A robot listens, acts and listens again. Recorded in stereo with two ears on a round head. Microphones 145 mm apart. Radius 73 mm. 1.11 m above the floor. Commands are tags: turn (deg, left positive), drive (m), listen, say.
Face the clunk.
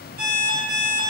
<listen/>
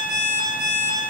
<listen/>
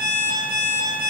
<say>I can't make out a clunk to turn to.</say>